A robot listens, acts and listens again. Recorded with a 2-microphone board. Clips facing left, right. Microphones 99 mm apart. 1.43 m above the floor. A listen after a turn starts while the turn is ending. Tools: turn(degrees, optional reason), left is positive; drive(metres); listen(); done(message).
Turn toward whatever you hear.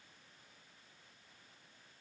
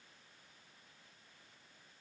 listen()
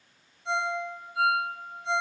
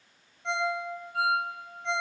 turn(degrees=-65, reason="The ringtone: about 65° right or 115° right.")
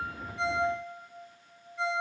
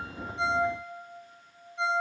turn(degrees=-25, reason="So it is at 25° right.")
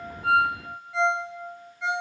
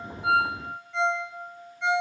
done("Found it: a ringtone, straight ahead.")